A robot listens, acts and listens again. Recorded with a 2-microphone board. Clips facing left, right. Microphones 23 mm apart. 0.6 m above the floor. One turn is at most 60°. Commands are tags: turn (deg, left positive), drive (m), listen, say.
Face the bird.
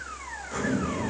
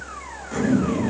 <listen/>
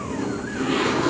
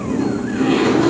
<listen/>
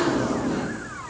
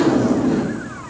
<say>I can't make out a bird, only a zipper.</say>